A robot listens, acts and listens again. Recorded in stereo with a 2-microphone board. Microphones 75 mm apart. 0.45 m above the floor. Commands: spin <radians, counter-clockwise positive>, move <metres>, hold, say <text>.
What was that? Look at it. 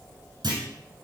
spin -1.57
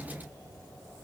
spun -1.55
say Facing where the clunk came from. I can't hear it now.